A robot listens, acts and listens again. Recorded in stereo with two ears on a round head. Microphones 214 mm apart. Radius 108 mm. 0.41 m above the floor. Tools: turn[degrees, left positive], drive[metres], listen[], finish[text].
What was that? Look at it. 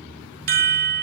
Thought: The chime: about 40° right or 140° right.
Action: turn[-40]
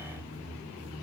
Action: listen[]
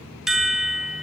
Action: finish[Facing the chime, under 1 m away.]